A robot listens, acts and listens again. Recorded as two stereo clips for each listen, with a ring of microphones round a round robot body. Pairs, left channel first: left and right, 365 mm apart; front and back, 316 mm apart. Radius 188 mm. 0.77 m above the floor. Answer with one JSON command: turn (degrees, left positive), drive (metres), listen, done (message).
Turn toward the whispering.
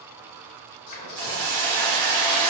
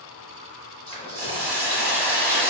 {"turn": 70}
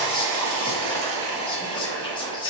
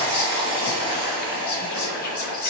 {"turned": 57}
{"turn": 15}
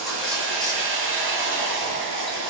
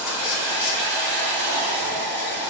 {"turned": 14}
{"listen": true}
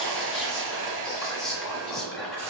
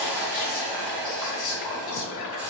{"done": "Facing the whispering, 1 to 2 m away."}